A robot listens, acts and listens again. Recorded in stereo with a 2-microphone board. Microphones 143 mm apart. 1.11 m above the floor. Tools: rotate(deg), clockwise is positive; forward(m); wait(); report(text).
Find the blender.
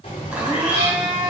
rotate(30)
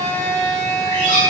rotate(-20)
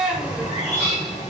report("Found it: a blender, straight ahead.")